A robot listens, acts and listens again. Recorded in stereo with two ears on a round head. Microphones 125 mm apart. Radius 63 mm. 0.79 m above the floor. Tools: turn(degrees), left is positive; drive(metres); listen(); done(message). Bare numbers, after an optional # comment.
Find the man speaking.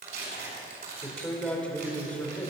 turn(30)
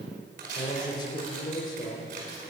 # So it is at 145° left.
turn(145)
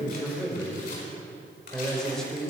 done("Facing the man speaking, 2 to 4 m away.")